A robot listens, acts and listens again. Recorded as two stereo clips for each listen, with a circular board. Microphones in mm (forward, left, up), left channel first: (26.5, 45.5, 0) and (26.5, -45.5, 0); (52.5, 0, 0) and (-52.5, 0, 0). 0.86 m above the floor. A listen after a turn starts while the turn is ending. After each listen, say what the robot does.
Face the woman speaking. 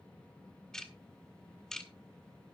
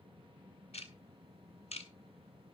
Keep listening.
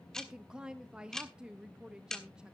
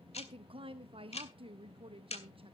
Turn 170° right.
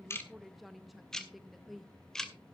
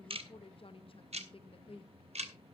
Found it: a woman speaking, straight ahead, under 1 m away.